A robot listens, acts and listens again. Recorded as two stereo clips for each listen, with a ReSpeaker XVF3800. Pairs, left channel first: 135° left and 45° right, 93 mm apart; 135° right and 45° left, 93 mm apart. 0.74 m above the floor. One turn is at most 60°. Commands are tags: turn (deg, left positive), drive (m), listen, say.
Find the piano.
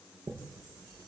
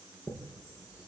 <listen/>
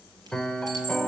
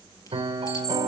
<turn deg="55"/>
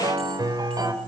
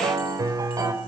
<say>Facing the piano, 2 to 4 m away.</say>